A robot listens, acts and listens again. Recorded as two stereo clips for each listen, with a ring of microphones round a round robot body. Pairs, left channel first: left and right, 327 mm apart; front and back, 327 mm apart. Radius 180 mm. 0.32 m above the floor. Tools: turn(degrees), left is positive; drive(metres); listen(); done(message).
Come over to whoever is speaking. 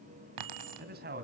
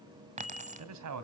turn(degrees=-150)
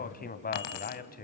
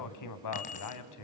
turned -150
turn(degrees=30)
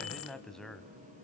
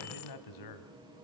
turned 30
drive(metres=1.0)
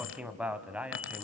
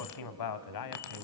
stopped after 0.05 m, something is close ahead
done("Blocked. The man speaking is further on, straight ahead.")